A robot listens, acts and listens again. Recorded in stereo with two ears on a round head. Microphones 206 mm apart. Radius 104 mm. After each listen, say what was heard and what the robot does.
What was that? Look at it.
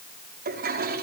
The toilet flushing: about 45° right or 135° right. Turn 45° right.
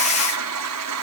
So it is at 90° right. Turn 90° right.
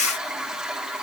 Found it: a toilet flushing, straight ahead, over 4 m away.